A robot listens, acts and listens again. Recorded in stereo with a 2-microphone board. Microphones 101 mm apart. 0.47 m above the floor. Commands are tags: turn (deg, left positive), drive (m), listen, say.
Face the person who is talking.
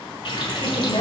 <turn deg="50"/>
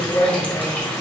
<turn deg="40"/>
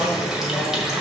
<turn deg="10"/>
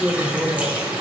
<turn deg="-15"/>
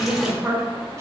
<turn deg="-25"/>
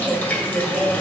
<turn deg="-20"/>
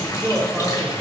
<say>Facing the woman speaking.</say>